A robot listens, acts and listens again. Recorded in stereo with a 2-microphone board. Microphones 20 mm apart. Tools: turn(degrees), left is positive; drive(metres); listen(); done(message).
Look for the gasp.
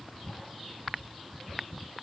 listen()
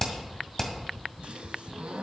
turn(degrees=-65)
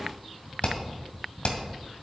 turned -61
listen()
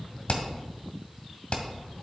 done("I heard a gasp, but can't make it out now. It was about 5° right or 55° right.")